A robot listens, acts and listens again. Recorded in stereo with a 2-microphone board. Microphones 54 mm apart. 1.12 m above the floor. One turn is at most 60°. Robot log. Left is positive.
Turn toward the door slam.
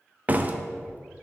note: The door slam: about 30° right or 150° right.
cmd yaw -30
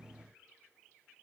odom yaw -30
cmd idle
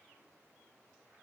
end: I heard a door slam, but can't make it out now. It was about straight ahead or 120° right.